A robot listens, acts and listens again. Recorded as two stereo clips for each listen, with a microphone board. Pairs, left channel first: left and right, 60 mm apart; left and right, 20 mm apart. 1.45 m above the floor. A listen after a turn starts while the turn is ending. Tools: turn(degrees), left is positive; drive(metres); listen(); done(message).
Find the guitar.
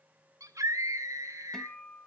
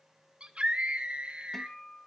turn(degrees=30)
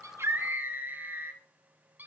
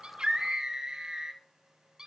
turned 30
listen()
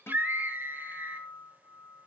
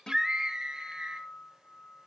turn(degrees=135)
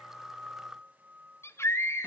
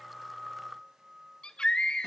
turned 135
turn(degrees=-25)
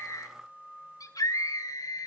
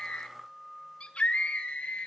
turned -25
done("Found it: a guitar, straight ahead, 1 to 2 m away.")